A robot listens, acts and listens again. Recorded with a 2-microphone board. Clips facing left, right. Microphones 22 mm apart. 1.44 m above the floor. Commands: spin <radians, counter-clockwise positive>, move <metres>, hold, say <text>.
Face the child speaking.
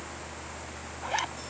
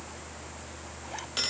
hold
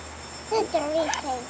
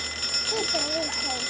spin 0.52
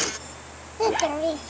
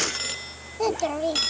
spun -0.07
spin 0.52
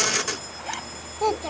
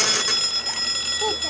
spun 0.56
spin 2.88
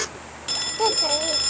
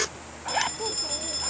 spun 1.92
spin 1.05
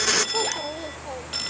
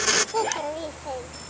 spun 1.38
spin -0.26
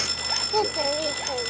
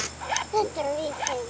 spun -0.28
say Facing the child speaking.